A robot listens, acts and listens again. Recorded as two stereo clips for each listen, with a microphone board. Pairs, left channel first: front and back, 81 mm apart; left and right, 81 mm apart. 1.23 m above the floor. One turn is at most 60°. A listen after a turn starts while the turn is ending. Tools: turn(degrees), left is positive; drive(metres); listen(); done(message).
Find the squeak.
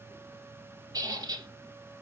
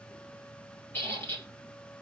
turn(degrees=60)
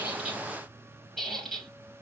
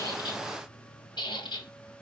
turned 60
turn(degrees=60)
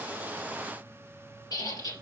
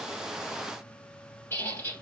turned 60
turn(degrees=30)
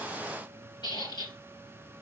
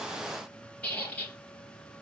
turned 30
turn(degrees=15)
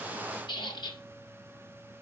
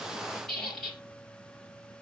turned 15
done("Found it: a squeak, straight ahead.")